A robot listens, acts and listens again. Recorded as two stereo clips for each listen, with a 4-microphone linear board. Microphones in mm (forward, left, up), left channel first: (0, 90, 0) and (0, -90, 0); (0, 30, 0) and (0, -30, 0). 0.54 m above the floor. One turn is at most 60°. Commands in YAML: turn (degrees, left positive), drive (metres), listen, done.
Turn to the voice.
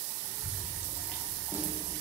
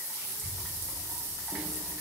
turn: 60
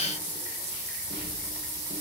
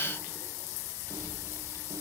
turn: 45
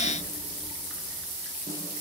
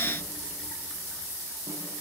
listen: true
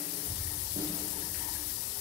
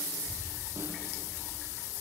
done: "Facing the child speaking, over 4 m away."